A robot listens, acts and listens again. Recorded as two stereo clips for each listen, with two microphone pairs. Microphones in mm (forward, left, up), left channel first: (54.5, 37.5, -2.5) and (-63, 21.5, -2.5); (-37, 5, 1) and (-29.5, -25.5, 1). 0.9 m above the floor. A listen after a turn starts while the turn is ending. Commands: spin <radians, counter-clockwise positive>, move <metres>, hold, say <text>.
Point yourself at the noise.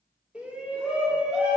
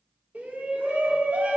spin -1.66
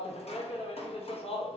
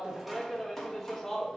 spin 0.35
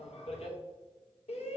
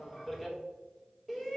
spin 0.17
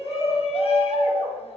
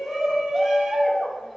say Facing the shout.